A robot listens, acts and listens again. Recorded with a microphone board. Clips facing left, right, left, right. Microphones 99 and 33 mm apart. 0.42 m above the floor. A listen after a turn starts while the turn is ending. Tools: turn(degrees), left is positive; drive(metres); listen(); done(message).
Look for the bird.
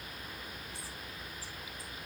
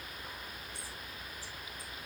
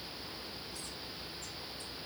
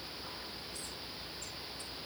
listen()
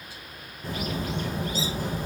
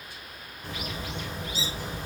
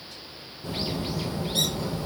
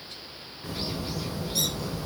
turn(degrees=40)
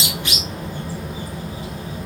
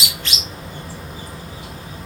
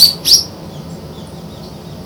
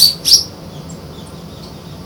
done("Facing the bird.")